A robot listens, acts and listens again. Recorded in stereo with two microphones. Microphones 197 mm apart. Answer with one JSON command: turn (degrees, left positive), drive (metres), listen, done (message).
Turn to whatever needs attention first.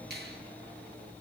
{"listen": true}
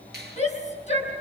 {"turn": 35}
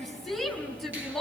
{"done": "Facing the shout."}